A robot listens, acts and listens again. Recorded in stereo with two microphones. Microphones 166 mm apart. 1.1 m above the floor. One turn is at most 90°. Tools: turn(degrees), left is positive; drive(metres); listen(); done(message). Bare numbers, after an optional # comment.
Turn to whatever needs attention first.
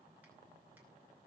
listen()
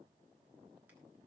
listen()
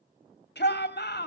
turn(90)
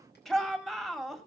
done("Facing the shout, 2 to 4 m away.")